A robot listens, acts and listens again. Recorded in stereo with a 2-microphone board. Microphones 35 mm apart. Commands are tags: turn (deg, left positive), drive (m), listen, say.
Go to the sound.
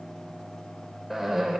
<turn deg="-30"/>
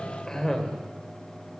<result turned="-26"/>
<turn deg="15"/>
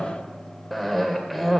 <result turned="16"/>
<drive m="1.0"/>
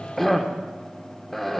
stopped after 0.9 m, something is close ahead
<say>I am next to the cough.</say>